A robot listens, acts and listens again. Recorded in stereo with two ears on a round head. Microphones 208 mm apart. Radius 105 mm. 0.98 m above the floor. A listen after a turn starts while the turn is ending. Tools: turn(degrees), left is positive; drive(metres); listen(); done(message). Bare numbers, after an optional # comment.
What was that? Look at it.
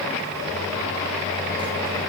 listen()
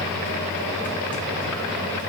listen()
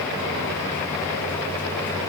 done("I can't make out anything.")